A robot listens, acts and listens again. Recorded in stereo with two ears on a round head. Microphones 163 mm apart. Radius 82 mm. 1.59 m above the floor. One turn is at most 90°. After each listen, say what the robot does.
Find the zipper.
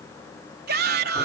Keep listening.
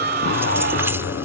Turn 65° left.
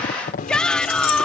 Turn 50° left.
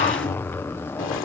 Turn 10° left.
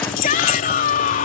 Keep listening.
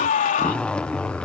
Facing the zipper.